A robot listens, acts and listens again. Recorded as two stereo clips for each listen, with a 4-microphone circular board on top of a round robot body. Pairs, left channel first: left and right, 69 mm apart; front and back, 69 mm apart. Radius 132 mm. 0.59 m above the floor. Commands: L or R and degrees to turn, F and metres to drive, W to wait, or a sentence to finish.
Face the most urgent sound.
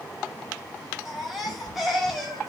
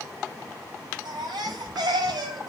R175
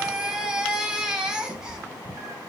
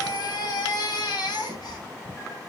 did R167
R10
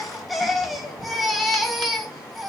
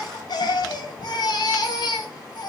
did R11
Found it: a baby crying, straight ahead.